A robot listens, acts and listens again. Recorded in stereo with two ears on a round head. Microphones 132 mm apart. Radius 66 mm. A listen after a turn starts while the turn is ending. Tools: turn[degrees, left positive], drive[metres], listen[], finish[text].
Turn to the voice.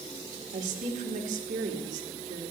Thought: The woman speaking: about 55° right or 125° right.
Action: turn[-55]
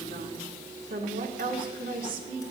Thought: So it is at 65° right.
Action: turn[-65]
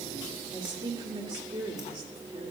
Thought: The woman speaking is now 35° right.
Action: turn[-35]
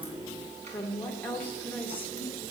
Thought: The woman speaking is now 15° left.
Action: turn[15]
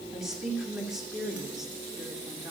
Action: finish[Found it: a woman speaking, straight ahead, 2 to 4 m away.]